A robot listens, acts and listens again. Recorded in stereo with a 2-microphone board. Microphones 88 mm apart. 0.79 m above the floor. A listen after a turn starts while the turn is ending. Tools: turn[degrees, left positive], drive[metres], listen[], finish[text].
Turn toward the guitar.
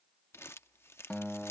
Action: turn[30]
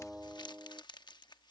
Thought: So it is at 15° right.
Action: turn[-15]
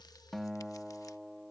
Action: finish[Found it: a guitar, straight ahead.]